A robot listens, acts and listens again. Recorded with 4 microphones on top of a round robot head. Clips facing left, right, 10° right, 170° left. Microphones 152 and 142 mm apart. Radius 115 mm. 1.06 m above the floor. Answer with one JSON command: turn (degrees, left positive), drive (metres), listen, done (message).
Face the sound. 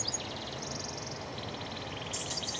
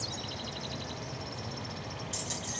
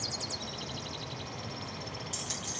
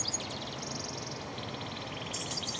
{"turn": -40}
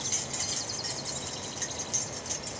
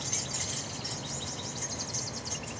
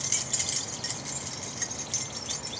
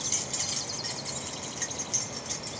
{"turn": 60}
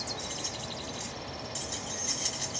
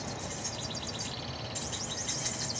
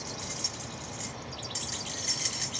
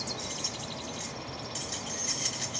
{"turn": 30}
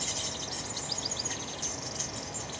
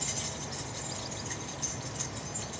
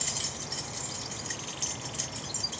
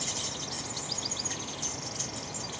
{"done": "Found it: keys jangling, straight ahead."}